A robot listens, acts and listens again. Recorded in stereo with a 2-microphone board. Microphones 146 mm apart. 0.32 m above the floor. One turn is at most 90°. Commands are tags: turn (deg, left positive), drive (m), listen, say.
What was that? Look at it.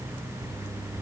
<listen/>
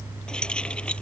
<turn deg="30"/>
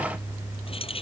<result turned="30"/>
<turn deg="90"/>
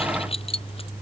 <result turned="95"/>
<turn deg="40"/>
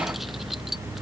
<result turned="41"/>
<listen/>
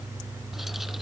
<listen/>
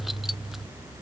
<say>Facing where the keys jangling came from. I can't hear it now.</say>